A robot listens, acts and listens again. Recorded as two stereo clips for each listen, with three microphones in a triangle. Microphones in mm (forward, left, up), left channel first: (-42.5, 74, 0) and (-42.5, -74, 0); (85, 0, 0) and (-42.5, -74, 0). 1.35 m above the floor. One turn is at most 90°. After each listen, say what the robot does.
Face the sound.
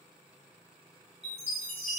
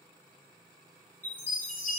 Turn 50° right.
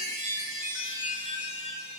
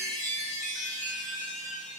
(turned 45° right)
Found it: a chime, straight ahead.